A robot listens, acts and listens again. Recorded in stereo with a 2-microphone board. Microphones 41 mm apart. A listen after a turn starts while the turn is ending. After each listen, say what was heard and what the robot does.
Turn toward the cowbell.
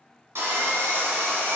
Keep listening.
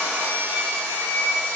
Keep listening.
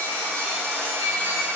I can't make out a cowbell, only sawing.